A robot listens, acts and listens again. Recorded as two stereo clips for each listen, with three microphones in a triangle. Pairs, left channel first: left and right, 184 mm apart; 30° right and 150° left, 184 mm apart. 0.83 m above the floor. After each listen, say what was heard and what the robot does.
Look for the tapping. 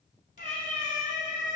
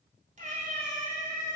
Keep listening.
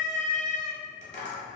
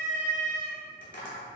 The tapping: 40° right. Turn 40° right.
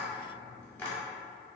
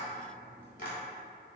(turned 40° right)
The tapping is now 10° left. Turn 10° left.
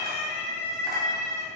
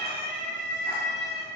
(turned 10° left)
Keep listening.
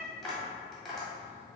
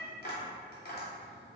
Facing the tapping, 1 to 2 m away.